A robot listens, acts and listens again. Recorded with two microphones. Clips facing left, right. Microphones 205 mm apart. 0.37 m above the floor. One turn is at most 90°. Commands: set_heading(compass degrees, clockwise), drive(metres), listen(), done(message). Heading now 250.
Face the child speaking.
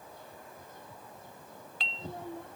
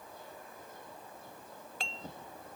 set_heading(160)
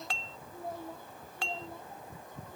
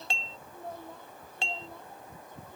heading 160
done("Facing the child speaking.")